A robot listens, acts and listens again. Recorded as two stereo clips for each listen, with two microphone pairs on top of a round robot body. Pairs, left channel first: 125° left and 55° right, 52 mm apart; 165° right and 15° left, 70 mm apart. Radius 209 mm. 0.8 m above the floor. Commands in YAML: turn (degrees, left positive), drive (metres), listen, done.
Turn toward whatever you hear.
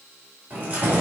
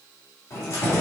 turn: -120
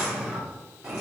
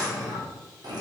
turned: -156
turn: 15
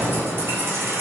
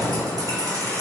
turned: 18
turn: -20
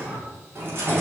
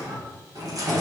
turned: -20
turn: -15
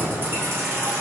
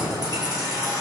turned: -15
turn: -15
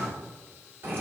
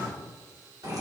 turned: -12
turn: -10
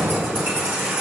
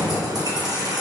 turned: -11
done: "Facing the keys jangling, 2 to 4 m away."